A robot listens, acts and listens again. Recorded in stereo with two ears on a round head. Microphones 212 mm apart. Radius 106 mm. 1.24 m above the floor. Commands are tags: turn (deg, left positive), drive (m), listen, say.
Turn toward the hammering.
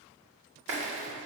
<listen/>
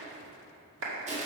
<listen/>
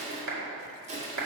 <say>I can't make out hammering, only a clap and crushing.</say>